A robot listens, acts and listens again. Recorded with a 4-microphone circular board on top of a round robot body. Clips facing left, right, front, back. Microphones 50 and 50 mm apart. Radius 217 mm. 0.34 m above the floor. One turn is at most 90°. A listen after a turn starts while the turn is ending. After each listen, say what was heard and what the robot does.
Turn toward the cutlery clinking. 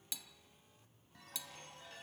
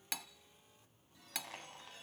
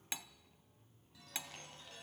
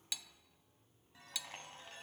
The cutlery clinking: 60° right. Turn 60° right.
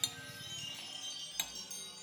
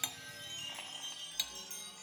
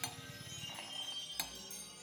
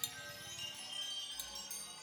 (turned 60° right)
The cutlery clinking is now 20° left. Turn 20° left.
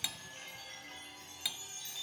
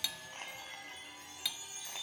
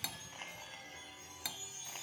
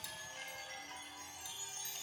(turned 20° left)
Found it: cutlery clinking, straight ahead.